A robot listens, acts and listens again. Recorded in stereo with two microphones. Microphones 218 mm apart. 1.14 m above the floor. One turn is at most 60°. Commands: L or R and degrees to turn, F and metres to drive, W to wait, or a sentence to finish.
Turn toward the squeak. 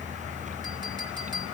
W
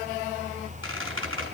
R60
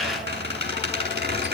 R50
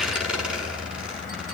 Found it: a squeak, straight ahead, over 4 m away.